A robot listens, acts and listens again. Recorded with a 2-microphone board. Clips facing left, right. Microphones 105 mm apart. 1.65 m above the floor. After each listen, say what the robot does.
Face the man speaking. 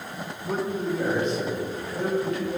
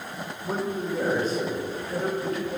Turn 40° right.
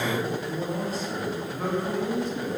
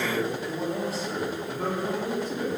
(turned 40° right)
Turn 100° right.
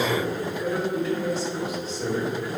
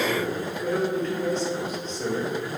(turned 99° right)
Turn 10° left.
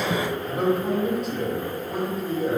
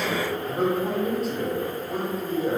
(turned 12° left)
Facing the man speaking.